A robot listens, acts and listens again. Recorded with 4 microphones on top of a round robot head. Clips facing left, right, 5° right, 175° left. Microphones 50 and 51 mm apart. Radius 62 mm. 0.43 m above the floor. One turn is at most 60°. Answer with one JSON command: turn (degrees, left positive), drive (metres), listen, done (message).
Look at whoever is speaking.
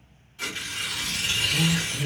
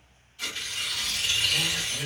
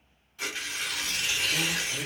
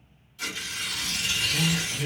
{"turn": -30}
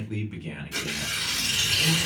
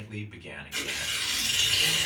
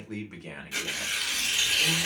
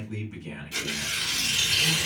{"done": "Found it: a man speaking, straight ahead."}